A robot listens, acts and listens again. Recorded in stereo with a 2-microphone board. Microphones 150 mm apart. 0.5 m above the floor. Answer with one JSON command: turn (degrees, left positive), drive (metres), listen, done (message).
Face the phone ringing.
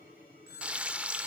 {"turn": 90}
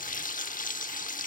{"listen": true}
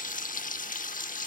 {"listen": true}
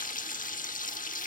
{"done": "I heard a phone ringing from this way, but can't make it out now."}